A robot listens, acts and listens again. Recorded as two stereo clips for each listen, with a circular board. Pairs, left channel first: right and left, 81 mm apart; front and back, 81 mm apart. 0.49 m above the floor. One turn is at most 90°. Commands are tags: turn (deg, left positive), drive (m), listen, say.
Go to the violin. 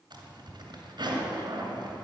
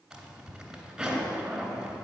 <listen/>
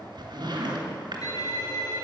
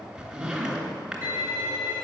<turn deg="-90"/>
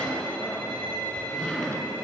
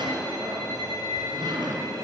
<turn deg="-30"/>
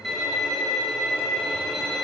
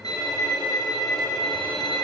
<drive m="1.0"/>
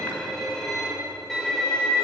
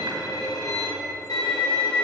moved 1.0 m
<drive m="1.0"/>
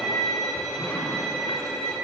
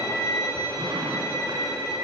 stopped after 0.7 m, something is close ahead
<say>I am next to the violin.</say>